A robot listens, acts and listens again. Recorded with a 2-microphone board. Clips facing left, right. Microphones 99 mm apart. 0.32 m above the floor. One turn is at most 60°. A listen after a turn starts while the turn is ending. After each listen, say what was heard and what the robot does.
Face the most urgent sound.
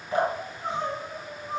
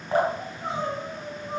Turn 30° right.
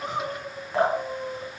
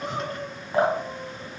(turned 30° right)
So it is at 20° left. Turn 20° left.
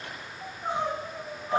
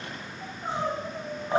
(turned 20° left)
The crying is now 10° left. Turn 10° left.
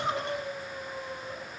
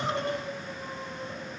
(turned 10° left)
Facing the crying.